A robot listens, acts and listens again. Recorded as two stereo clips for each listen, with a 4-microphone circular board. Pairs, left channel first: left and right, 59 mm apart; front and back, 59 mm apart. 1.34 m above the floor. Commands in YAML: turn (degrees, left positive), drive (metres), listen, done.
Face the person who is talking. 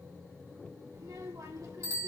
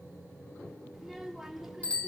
turn: -95
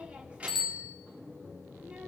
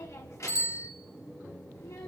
turn: -25
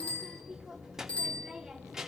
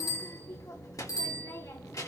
turn: -10
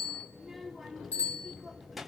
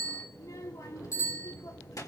done: "Found it: a child speaking, straight ahead."